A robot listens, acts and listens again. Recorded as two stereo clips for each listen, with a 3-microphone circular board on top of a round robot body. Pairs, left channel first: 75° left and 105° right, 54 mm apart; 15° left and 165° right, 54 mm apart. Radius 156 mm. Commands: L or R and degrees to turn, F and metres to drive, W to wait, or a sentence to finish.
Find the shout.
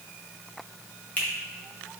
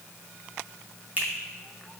W
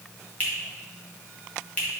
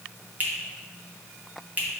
W
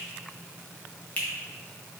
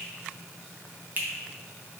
I can't make out a shout, only a finger snap.